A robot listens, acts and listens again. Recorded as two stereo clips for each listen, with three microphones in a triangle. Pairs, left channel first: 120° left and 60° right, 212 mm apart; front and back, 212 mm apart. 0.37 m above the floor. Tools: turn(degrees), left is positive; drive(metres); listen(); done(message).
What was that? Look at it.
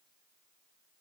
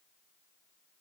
listen()
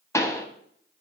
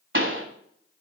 turn(degrees=-165)
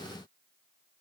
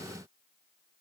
done("Facing where the pop came from. I can't hear it now.")